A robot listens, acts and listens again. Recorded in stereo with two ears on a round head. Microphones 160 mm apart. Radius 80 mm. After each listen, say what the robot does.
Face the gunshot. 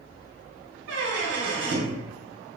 Keep listening.
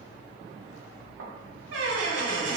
Keep listening.
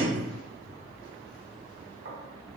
I can't make out a gunshot to turn to.